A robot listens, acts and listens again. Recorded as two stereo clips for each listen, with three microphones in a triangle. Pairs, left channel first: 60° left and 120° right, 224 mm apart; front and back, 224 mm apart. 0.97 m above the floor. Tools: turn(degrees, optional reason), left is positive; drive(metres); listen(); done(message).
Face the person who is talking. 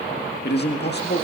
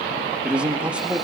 turn(degrees=95, reason="The man speaking: 95° left.")
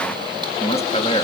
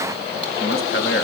done("Facing the man speaking, 1 to 2 m away.")